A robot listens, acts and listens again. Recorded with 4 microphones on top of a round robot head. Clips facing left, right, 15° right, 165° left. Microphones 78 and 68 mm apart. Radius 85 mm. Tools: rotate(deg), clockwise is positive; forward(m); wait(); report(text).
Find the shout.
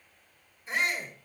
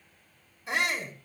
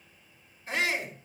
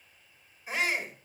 rotate(110)
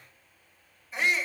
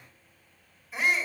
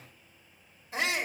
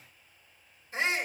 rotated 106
report("Found it: a shout, straight ahead, over 4 m away.")